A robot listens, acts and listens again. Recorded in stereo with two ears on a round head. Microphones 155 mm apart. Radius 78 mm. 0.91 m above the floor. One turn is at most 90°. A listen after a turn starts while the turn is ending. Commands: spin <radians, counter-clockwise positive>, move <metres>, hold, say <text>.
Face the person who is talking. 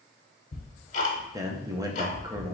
spin -0.35
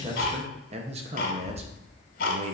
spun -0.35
spin -1.57
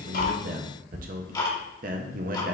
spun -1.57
spin -0.96
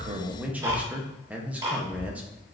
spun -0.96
spin -0.17
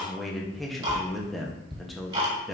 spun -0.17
say Facing the man speaking, under 1 m away.